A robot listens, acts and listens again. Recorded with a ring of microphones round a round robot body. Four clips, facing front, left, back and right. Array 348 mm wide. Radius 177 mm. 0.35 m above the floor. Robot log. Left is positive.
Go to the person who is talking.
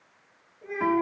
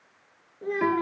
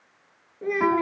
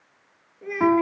note: The child speaking: 175° left.
cmd yaw +175
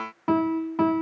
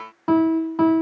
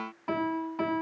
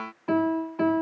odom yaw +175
cmd idle
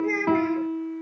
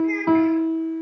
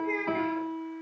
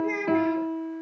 note: The child speaking is now 20° right.
cmd yaw -20
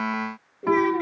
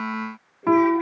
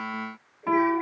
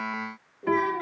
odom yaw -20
cmd fwd 1.0
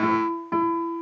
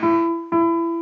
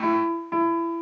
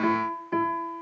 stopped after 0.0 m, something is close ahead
cmd idle
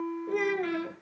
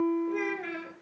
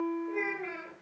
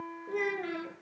end: Something is in my way. I am facing the child speaking but have not reached it.